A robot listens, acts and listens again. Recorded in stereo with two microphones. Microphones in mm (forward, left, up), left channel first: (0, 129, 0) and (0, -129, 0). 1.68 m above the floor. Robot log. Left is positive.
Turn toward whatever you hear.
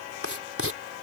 note: The writing: about 60° right or 120° right.
cmd yaw -60
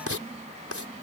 note: So it is at 60° right.
cmd yaw -60
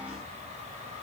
cmd idle
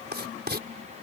note: The writing is now 40° right.
cmd yaw -40
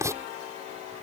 note: The writing is now 10° right.
cmd yaw -10
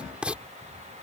end: Found it: writing, straight ahead.